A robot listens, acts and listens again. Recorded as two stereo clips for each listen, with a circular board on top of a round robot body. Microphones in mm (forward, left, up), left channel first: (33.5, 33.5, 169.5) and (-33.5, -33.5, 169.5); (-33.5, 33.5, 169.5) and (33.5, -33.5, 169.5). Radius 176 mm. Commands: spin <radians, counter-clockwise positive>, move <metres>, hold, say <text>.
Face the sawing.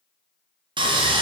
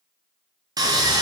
spin -1.75
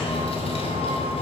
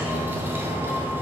spin 0.44
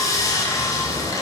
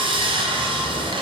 spin -0.17
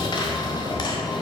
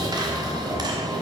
say Found it: sawing, straight ahead.